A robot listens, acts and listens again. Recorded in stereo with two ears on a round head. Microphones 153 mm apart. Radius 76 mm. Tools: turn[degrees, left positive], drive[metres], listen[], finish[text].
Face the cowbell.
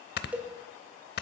Action: turn[-30]
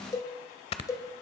Thought: So it is at 20° left.
Action: turn[20]
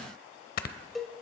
Action: finish[Found it: a cowbell, straight ahead, 1 to 2 m away.]